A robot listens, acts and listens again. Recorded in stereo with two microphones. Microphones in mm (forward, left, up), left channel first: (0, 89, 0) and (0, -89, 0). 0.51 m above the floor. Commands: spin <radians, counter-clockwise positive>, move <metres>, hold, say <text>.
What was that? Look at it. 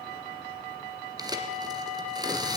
spin -0.35
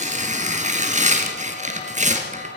spin -2.36
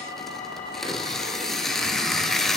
say Found it: tearing paper, straight ahead.